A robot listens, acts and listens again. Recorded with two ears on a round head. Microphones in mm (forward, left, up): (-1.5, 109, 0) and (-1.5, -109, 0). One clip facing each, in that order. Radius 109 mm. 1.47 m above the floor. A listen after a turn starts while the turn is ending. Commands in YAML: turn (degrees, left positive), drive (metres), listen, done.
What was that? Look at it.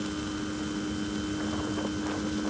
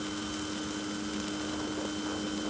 listen: true
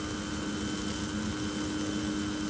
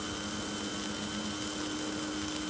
listen: true
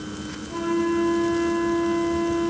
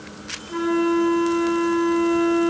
turn: -30
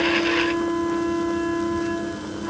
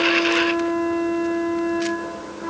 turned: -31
turn: -120
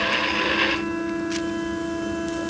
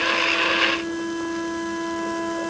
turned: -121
done: "Found it: a flute, straight ahead."